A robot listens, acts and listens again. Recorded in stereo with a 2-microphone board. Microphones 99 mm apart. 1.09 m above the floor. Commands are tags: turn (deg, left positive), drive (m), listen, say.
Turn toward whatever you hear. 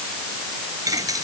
<turn deg="-35"/>
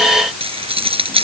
<turn deg="-110"/>
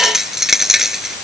<say>Found it: cutlery clinking, straight ahead.</say>